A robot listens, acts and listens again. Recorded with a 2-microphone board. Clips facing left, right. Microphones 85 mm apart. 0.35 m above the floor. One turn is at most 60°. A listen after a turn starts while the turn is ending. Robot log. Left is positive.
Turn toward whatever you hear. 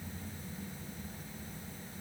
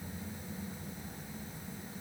cmd idle
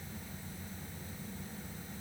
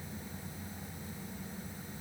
cmd idle
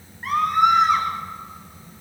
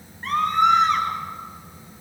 cmd yaw +30
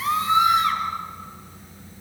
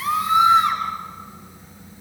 note: So it is at 25° right.
cmd yaw -25
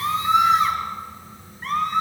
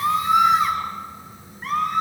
end: Found it: a scream, straight ahead, over 4 m away.